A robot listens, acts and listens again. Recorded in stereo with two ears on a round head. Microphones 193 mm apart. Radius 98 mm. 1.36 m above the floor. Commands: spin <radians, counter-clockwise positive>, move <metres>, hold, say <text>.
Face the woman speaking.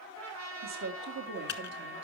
spin -0.96
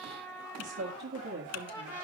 spin -0.87
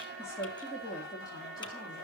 spin 0.26
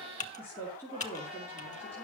spin 0.17
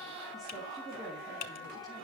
hold
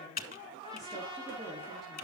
hold
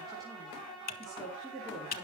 say Found it: a woman speaking, straight ahead.